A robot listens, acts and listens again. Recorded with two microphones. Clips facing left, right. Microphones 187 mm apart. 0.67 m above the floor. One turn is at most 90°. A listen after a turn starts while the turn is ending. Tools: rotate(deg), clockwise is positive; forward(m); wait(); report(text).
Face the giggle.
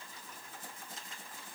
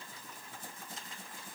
wait()
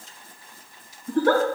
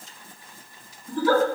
rotate(-60)
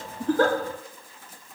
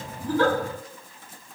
wait()
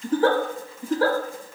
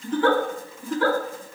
rotate(-45)
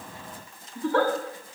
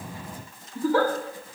report("Facing the giggle, under 1 m away.")